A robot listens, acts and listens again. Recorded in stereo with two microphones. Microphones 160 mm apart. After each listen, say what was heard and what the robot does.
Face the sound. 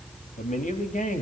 The man speaking: about 55° left or 125° left. Turn 55° left.
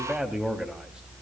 Found it: a man speaking, straight ahead.